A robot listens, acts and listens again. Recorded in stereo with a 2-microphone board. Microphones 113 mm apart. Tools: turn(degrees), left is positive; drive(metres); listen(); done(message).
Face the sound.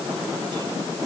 listen()
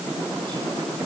listen()
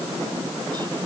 done("I can't make out anything.")